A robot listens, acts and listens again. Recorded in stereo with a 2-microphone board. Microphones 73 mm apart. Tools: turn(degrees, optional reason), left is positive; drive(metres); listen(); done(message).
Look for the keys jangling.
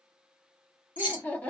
turn(degrees=-20, reason="The keys jangling: about 20° right or 160° right.")
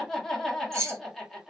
turn(degrees=-140, reason="So it is at 140° right.")
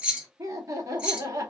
turn(degrees=-15, reason="The keys jangling is now 15° right.")
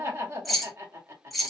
done("Facing the keys jangling.")